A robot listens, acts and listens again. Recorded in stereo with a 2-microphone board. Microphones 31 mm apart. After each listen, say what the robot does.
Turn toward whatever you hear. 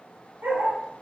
Turn 90° right.
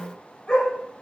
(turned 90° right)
Turn 25° left.
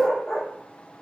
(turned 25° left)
Turn 10° left.
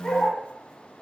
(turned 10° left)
Turn 15° left.
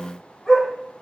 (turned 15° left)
Turn 10° left.
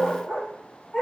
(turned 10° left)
Turn 10° left.
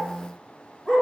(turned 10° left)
Facing the dog barking.